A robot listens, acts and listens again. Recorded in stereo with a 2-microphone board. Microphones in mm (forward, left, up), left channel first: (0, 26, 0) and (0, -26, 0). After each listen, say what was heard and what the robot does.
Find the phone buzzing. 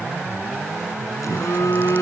Turn 90° left.
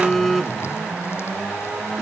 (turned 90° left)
Facing the phone buzzing.